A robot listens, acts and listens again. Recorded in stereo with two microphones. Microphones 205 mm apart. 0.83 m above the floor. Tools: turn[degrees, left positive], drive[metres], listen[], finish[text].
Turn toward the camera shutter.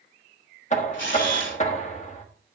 Thought: The camera shutter: about 65° left or 115° left.
Action: turn[65]
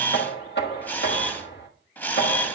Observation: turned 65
Thought: So it is at 10° left.
Action: turn[10]
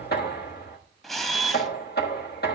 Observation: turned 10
Action: finish[Found it: a camera shutter, straight ahead.]